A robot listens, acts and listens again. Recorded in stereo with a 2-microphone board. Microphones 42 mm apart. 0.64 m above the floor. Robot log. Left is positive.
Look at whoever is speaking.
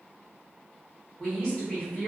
note: The woman speaking: about 20° left or 160° left.
cmd yaw +20
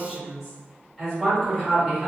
end: Found it: a woman speaking, straight ahead.